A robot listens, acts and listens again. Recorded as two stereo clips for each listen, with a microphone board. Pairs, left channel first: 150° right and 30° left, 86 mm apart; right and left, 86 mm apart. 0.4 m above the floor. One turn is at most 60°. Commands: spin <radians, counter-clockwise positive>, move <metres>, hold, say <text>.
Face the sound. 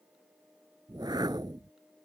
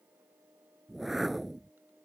say Facing the whoosh.